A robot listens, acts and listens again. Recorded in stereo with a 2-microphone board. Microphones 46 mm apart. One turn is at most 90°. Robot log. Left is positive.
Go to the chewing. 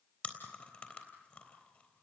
note: The chewing: about 30° left or 150° left.
cmd yaw +30
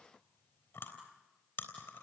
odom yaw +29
note: So it is at 120° left.
cmd yaw +90
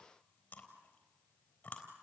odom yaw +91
note: The chewing is now 30° left.
cmd yaw +30
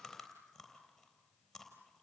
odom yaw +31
cmd fwd 1.0
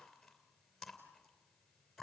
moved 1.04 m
cmd fwd 1.0
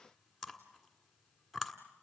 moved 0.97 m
cmd fwd 1.0
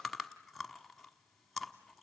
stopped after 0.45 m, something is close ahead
end: I am next to the chewing.